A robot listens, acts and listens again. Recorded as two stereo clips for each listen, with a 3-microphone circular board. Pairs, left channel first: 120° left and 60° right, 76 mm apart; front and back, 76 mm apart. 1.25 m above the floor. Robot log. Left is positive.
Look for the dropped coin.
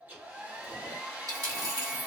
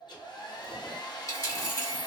note: The dropped coin: 40° right.
cmd yaw -40
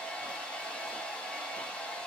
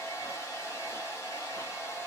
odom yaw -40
end: Facing where the dropped coin came from. I can't hear it now.